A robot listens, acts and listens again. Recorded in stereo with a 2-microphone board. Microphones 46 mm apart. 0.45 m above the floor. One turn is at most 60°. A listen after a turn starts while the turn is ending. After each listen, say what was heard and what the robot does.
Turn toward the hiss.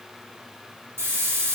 The hiss: about 65° right or 115° right. Turn 60° right.
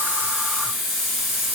Facing the hiss.